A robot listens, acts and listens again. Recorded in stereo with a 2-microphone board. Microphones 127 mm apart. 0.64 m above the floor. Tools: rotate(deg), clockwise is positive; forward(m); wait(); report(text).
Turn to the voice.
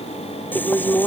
rotate(-15)
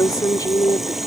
rotate(-150)
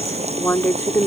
rotate(-20)
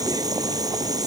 wait()
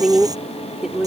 report("Found it: a woman speaking, straight ahead.")